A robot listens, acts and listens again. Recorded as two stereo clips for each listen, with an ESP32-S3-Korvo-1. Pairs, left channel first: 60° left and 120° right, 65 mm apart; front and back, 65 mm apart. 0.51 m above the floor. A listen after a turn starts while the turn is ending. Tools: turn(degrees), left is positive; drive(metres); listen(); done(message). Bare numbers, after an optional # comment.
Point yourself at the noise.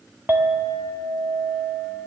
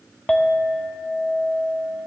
# The clink: 70° right.
turn(-70)
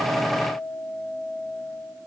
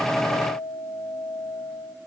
# The clink is now 10° left.
turn(10)
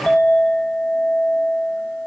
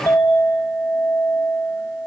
done("Found it: a clink, straight ahead, 1 to 2 m away.")